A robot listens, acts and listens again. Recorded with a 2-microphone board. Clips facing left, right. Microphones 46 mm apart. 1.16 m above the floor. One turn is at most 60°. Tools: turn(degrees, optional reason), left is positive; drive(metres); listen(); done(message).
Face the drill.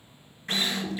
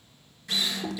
turn(degrees=40, reason="The drill: about 40° left or 140° left.")
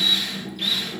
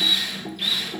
done("Facing the drill.")